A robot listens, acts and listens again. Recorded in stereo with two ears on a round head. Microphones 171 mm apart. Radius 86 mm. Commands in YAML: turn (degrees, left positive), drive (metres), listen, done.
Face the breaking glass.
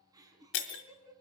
turn: 65
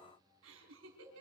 listen: true
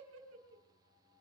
done: "I heard breaking glass, but can't make it out now. It was about straight ahead or 50° left."